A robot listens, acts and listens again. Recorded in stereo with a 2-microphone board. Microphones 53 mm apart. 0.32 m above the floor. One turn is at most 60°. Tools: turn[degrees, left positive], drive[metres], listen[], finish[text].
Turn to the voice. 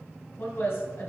Thought: The woman speaking: about 50° left or 130° left.
Action: turn[50]
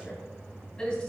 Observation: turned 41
Thought: So it is at 20° left.
Action: turn[20]
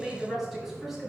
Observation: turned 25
Action: finish[Found it: a woman speaking, straight ahead, 2 to 4 m away.]